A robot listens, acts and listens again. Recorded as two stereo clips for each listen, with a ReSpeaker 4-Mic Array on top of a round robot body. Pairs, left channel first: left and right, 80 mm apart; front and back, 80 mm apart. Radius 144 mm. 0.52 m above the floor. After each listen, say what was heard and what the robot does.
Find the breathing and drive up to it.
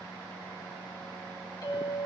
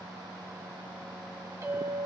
Keep listening.
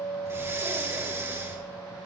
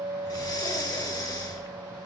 The breathing: 30° right. Turn 30° right.
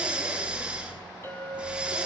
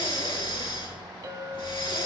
The breathing is now 15° right. Turn 15° right.
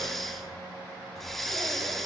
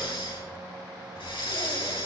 Drive 1.0 m forward.
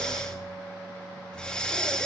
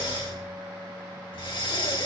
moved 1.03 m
The breathing is now 10° left. Turn 10° left.
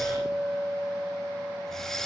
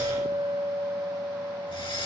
Drive 1.0 m forward.
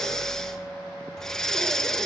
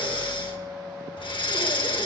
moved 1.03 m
Drive 1.0 m forward.
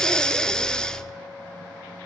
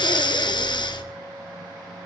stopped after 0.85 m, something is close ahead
The breathing is now 10° left. Turn 10° left.
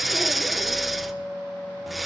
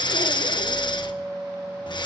I am next to the breathing.